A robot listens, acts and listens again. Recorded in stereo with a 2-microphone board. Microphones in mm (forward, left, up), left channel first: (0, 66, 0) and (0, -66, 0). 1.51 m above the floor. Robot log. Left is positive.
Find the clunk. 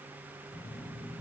cmd idle
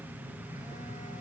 cmd idle
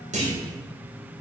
note: The clunk: about 65° right or 115° right.
cmd yaw -65
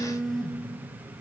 cmd idle
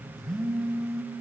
end: I heard a clunk, but can't make it out now. It was about straight ahead or 50° right.